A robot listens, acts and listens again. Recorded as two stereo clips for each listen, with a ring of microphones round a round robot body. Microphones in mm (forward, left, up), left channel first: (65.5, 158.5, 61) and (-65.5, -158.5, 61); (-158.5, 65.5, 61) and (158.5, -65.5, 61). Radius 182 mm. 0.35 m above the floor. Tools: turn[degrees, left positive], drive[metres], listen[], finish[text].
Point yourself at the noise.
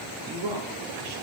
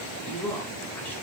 Thought: The man speaking: 115° right.
Action: turn[-115]
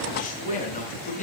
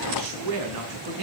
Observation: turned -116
Action: finish[Facing the man speaking, over 4 m away.]